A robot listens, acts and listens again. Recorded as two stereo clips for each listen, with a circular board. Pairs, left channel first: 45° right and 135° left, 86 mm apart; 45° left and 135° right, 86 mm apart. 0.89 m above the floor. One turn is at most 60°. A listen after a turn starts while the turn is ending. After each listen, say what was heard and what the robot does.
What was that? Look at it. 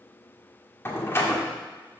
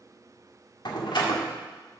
The door slam: 15° left. Turn 15° left.
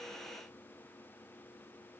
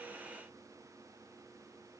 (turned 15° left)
Facing where the door slam came from. I can't hear it now.